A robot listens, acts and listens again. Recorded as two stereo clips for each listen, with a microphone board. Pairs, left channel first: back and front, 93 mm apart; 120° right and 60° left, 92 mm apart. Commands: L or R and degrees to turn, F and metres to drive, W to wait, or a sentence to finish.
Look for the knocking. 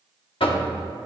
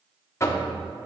R175
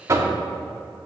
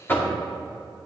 R55
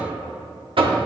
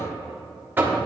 R10
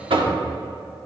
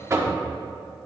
Facing the knocking, 1 to 2 m away.